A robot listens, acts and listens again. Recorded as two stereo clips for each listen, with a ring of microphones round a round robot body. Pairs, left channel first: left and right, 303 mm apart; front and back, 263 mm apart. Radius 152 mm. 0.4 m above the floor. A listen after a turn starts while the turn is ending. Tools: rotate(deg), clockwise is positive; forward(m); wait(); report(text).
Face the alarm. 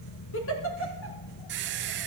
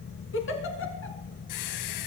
wait()
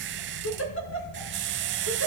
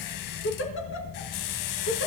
wait()
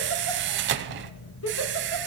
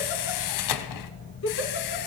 report("I can't make out an alarm, only a giggle and a squeak.")